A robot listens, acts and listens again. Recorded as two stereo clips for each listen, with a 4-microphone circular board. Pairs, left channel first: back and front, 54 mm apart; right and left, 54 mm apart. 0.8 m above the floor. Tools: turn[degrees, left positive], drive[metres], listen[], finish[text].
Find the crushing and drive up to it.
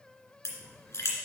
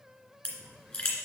Thought: The crushing: 165° right.
Action: turn[-165]
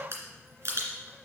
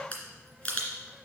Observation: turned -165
Thought: The crushing is now 35° right.
Action: turn[-35]
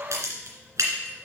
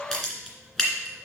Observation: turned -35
Thought: The crushing is now 15° right.
Action: turn[-15]
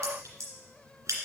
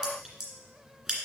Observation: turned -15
Action: drive[1.0]
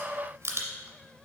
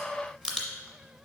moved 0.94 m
Thought: The crushing is now 10° right.
Action: turn[-10]
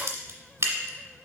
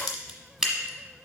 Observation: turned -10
Action: drive[1.0]
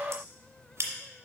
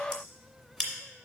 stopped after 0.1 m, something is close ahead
Action: finish[Arrived at the crushing, straight ahead.]